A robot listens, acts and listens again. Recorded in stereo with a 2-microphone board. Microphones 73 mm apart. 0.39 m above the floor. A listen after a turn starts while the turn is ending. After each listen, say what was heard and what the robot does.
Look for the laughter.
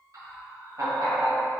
The laughter: about 60° right or 120° right. Turn 60° right.
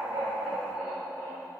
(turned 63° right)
Found it: laughter, straight ahead, 1 to 2 m away.